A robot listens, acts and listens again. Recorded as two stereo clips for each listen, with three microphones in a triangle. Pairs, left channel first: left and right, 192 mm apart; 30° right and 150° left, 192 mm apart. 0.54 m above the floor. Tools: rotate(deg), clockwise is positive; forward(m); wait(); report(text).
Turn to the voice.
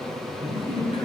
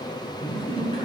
rotate(-30)
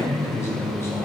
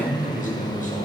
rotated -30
rotate(-15)
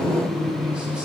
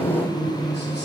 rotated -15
report("Facing the man speaking, 2 to 4 m away.")